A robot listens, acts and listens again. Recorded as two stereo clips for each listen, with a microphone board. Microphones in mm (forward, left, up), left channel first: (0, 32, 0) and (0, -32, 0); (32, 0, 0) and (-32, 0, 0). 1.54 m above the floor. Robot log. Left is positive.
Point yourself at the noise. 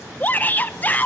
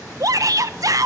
note: The shout: 155° left.
cmd yaw +155
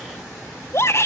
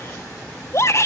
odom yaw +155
note: The shout is now 45° left.
cmd yaw +45
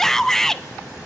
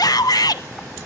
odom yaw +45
end: Facing the shout.